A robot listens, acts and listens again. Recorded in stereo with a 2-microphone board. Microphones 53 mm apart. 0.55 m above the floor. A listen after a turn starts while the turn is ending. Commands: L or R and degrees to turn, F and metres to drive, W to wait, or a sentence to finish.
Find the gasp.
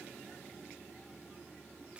W
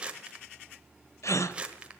L90
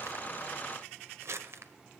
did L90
I heard a gasp from this way, but can't make it out now.